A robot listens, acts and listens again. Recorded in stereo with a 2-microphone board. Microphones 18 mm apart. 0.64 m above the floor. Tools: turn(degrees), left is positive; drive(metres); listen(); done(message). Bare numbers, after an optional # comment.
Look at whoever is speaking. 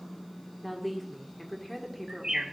turn(30)
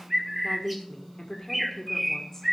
# So it is at 140° left.
turn(140)
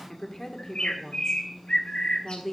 # The woman speaking is now 30° left.
turn(30)
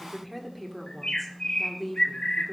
done("Facing the woman speaking, 1 to 2 m away.")